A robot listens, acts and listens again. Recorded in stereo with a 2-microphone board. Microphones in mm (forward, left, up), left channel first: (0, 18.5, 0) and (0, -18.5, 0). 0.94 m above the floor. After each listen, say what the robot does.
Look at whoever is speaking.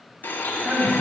Turn 45° right.
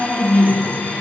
Turn 90° right.
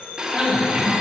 Turn 25° right.
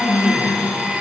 Facing the man speaking, 1 to 2 m away.